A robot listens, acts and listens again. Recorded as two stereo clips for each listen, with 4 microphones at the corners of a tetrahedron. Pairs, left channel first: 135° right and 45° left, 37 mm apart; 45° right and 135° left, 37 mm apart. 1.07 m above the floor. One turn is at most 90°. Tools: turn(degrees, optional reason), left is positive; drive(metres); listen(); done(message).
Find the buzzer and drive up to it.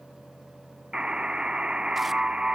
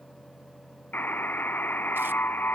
turn(degrees=-20, reason="The buzzer: 20° right.")
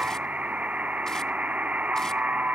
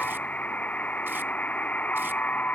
drive(metres=1.0)
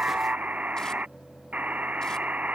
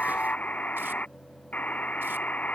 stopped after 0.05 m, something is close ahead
done("Blocked. The buzzer is further on, straight ahead.")